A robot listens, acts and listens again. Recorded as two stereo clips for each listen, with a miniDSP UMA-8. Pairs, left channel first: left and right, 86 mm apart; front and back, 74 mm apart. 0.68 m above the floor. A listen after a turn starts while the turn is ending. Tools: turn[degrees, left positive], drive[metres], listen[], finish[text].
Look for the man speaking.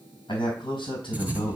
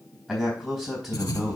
Thought: The man speaking: 90° left.
Action: turn[90]
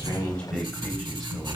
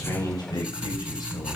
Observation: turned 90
Action: finish[Found it: a man speaking, straight ahead, 2 to 4 m away.]